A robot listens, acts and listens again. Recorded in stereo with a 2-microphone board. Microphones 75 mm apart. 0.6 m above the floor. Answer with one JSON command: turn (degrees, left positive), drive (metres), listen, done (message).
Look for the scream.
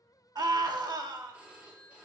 {"turn": -55}
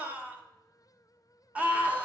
{"turn": -25}
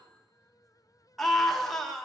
{"done": "Facing the scream, 1 to 2 m away."}